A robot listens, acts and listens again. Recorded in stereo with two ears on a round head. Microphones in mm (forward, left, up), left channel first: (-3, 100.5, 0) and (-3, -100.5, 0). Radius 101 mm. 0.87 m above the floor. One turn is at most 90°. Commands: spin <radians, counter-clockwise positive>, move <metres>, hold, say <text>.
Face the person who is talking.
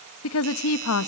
spin 1.22
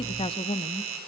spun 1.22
spin 0.44
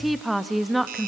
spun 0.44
say Facing the woman speaking, under 1 m away.